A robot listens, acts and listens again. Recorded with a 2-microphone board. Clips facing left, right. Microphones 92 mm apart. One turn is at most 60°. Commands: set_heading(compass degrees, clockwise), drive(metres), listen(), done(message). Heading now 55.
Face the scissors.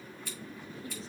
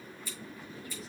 set_heading(355)
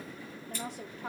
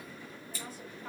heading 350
set_heading(295)
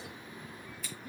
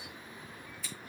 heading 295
done("Found it: scissors, straight ahead, 2 to 4 m away.")